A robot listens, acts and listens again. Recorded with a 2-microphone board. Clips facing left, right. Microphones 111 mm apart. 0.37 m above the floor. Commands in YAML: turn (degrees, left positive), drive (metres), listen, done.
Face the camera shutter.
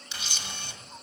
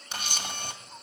turn: -50
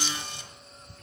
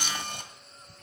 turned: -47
turn: -70
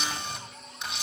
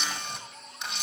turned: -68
done: "Facing the camera shutter, 1 to 2 m away."